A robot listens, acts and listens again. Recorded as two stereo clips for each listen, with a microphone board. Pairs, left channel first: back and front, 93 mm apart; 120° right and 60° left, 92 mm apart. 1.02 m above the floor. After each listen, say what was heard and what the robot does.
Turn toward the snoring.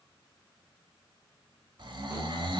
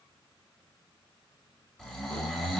The snoring: 35° right. Turn 35° right.
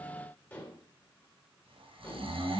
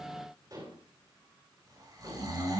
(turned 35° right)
Facing the snoring.